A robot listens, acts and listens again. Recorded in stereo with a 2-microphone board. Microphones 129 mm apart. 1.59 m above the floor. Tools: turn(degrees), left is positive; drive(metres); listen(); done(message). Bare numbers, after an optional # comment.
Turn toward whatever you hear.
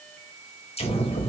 # The explosion: about 50° left or 130° left.
turn(50)
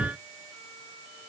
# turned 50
listen()
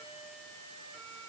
done("I heard an explosion, but can't make it out now. It was about straight ahead or 80° left.")